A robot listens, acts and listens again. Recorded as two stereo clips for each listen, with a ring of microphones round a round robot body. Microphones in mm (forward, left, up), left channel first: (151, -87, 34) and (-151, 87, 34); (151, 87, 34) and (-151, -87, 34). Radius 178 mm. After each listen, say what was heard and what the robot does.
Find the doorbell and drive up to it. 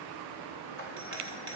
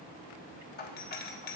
The doorbell: 95° left. Turn 95° left.
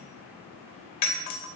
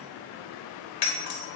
The doorbell is now 10° left. Turn 10° left.
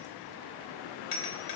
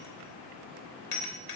Drive 1.0 m forward.
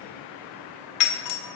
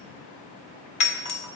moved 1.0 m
Drive 1.0 m forward.
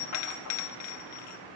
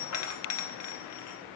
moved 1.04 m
Drive 1.0 m forward.
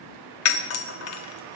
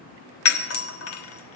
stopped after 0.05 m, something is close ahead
I am next to the doorbell.